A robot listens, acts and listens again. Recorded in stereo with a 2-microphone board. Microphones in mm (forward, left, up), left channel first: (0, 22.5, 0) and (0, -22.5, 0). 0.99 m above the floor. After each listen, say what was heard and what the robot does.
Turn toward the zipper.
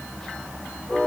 Keep listening.
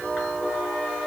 Keep listening.
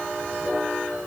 I can't make out a zipper to turn to.